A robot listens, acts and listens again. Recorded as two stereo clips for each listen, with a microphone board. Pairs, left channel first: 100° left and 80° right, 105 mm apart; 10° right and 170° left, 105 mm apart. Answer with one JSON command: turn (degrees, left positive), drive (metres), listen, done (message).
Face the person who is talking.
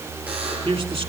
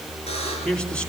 {"turn": -90}
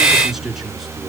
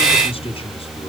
{"turn": 10}
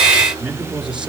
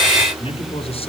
{"done": "Facing the man speaking."}